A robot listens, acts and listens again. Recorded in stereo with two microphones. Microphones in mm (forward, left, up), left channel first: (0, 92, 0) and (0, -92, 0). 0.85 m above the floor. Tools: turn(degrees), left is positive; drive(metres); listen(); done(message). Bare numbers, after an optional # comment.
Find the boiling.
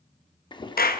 # The boiling: about 25° left or 155° left.
turn(25)
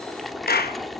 done("Facing the boiling.")